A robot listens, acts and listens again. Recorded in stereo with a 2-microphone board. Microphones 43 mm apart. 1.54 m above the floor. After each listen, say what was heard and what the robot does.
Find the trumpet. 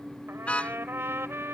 The trumpet: about 70° right or 110° right. Turn 70° right.
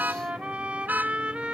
So it is at 30° right. Turn 30° right.
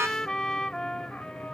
The trumpet is now 20° left. Turn 20° left.
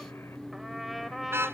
Facing the trumpet.